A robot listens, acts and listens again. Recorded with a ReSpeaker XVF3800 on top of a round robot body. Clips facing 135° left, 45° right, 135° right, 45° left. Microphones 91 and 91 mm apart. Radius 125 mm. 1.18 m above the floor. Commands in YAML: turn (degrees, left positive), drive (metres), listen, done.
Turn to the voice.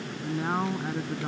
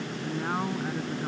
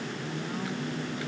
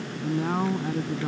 turn: 60
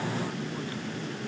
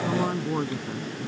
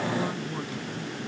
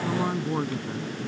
turn: -10
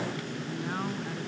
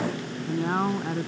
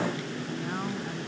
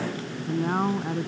done: "Facing the man speaking."